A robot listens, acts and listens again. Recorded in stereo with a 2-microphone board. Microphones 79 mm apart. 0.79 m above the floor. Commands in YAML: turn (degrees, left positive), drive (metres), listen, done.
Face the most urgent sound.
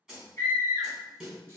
turn: 30
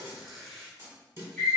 done: "Facing the scream."